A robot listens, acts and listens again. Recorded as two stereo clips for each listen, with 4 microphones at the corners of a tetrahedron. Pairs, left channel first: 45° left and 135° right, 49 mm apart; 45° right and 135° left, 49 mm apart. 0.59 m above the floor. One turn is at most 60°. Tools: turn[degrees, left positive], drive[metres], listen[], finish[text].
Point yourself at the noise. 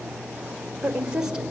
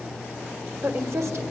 Thought: The woman speaking: 150° left.
Action: turn[60]
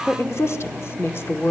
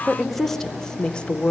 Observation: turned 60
Thought: The woman speaking is now 15° left.
Action: turn[15]
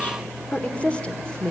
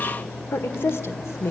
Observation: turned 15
Thought: The woman speaking is now 30° right.
Action: turn[-30]
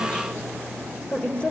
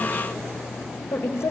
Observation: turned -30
Thought: The woman speaking is now 15° right.
Action: turn[-15]
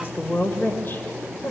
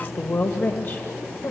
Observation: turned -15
Action: finish[Facing the woman speaking, 2 to 4 m away.]